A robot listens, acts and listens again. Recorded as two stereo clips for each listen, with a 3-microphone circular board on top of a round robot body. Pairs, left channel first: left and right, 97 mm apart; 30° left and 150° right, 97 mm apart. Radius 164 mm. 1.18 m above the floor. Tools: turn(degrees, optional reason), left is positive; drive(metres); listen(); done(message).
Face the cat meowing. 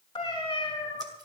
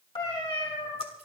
turn(degrees=55, reason="The cat meowing: 55° left.")
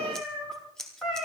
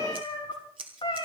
done("Facing the cat meowing, over 4 m away.")